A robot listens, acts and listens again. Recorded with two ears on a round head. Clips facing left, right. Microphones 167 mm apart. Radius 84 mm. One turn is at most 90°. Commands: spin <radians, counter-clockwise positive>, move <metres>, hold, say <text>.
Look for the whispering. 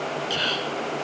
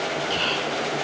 spin 0.52
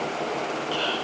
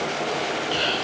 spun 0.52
spin -0.35
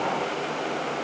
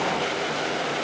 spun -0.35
hold
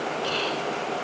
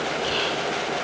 say Found it: whispering, straight ahead.